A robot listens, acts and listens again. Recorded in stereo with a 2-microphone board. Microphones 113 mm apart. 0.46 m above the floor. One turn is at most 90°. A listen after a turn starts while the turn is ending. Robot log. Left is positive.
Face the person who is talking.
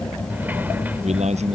cmd yaw -90
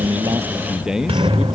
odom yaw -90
end: Facing the man speaking.